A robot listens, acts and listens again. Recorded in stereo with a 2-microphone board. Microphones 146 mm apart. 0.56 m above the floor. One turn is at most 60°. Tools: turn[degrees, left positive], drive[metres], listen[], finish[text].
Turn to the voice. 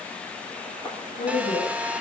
Thought: The woman speaking: about 65° left or 115° left.
Action: turn[60]
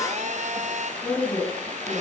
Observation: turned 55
Thought: So it is at 10° left.
Action: turn[10]
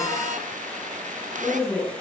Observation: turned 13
Action: finish[Found it: a woman speaking, straight ahead.]